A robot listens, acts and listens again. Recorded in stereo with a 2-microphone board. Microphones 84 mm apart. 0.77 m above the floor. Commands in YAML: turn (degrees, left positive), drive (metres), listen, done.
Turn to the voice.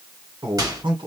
turn: -90
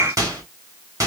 listen: true
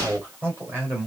turn: -25
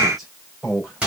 done: "Found it: a man speaking, straight ahead, 2 to 4 m away."